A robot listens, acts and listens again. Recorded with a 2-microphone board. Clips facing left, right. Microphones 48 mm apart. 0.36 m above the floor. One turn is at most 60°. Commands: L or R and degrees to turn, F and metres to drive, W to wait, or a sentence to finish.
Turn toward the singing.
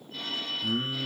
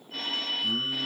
L25
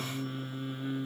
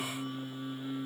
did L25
L60
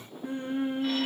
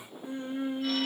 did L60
L40
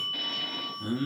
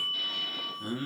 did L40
Found it: singing, straight ahead.